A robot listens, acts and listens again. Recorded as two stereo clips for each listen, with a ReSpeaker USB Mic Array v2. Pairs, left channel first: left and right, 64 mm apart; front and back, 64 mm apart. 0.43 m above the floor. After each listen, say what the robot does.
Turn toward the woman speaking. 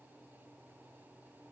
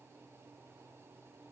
Keep listening.
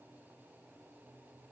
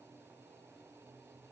Keep listening.
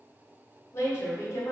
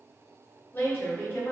Turn 60° left.
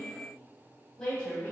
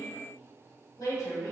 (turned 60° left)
Turn 15° left.
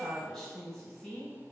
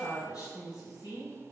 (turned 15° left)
Facing the woman speaking.